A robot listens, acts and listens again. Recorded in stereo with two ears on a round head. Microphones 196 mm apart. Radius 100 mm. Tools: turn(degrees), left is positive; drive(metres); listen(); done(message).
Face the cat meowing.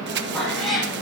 turn(degrees=30)
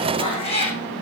turn(degrees=150)
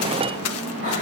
listen()
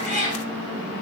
turn(degrees=35)
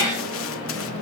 listen()
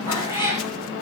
turn(degrees=20)
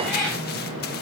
done("Facing the cat meowing, over 4 m away.")